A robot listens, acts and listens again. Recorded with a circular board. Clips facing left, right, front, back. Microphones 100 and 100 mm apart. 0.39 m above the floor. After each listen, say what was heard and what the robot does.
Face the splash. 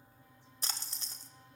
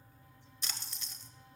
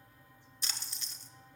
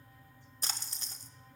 The splash: 135° left. Turn 135° left.
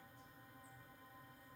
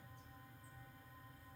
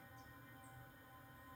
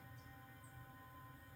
Facing where the splash came from. I can't hear it now.